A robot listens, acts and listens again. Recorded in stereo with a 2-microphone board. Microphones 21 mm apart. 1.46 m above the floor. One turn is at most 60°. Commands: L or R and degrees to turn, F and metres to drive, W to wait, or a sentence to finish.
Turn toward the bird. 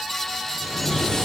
L30
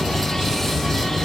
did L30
L60
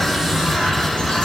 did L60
L60
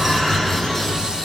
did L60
L40
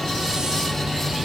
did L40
Facing the bird.